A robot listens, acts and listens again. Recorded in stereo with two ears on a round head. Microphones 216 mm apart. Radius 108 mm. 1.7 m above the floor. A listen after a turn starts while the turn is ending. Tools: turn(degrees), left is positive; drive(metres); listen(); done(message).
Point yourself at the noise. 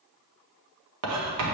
turn(degrees=-90)
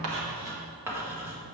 turn(degrees=-10)
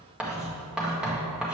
done("Facing the writing, 1 to 2 m away.")